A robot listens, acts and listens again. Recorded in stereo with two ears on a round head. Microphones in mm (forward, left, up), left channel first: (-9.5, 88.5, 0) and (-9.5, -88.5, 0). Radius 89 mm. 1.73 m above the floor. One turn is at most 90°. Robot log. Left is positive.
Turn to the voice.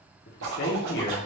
note: The man speaking: about 50° left or 130° left.
cmd yaw +50
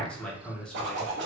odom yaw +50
end: Facing the man speaking.